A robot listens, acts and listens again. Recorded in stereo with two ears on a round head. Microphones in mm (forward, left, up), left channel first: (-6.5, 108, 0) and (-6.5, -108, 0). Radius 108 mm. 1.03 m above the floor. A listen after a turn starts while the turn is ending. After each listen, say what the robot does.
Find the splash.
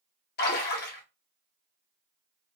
Turn 40° left.
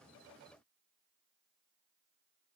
Keep listening.
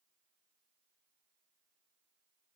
I heard a splash, but can't make it out now. It was about straight ahead or 100° left.